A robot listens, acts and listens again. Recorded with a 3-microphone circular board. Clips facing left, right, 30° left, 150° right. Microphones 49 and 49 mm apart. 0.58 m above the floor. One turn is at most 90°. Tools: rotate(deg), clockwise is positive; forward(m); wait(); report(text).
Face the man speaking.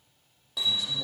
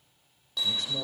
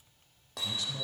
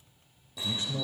rotate(90)
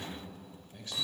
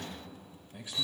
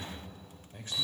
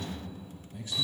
rotate(15)
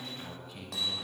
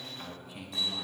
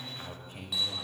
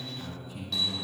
rotate(10)
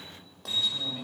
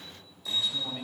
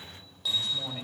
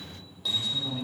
report("Facing the man speaking, 2 to 4 m away.")